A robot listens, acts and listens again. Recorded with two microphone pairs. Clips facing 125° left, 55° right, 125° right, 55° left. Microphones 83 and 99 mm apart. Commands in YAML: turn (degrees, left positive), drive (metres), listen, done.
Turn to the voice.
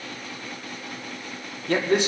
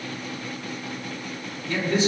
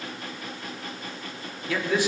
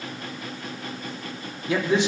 turn: 115
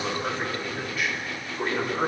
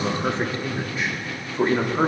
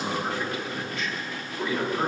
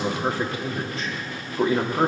done: "Found it: a man speaking, straight ahead, 2 to 4 m away."